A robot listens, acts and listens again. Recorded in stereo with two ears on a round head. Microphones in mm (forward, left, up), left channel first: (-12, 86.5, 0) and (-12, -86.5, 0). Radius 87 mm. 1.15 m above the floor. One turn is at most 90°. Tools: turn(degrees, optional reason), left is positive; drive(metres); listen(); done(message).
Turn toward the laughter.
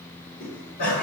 turn(degrees=55, reason="The laughter: about 55° left or 125° left.")
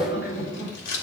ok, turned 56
turn(degrees=65, reason="So it is at 65° left.")
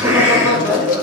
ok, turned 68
turn(degrees=-20, reason="The laughter is now 20° right.")
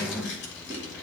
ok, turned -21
listen()
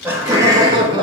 turn(degrees=-25, reason="The laughter is now 25° right.")
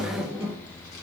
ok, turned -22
turn(degrees=-10, reason="The laughter is now 10° right.")
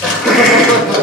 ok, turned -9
done("Found it: laughter, straight ahead, 1 to 2 m away.")